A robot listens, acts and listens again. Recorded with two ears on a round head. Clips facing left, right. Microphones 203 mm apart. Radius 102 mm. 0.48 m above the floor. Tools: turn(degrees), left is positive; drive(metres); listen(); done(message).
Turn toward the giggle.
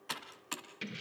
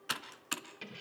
listen()
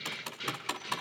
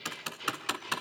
listen()
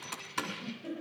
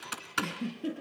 turn(degrees=-50)
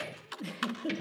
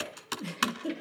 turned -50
done("Found it: a giggle, straight ahead, over 4 m away.")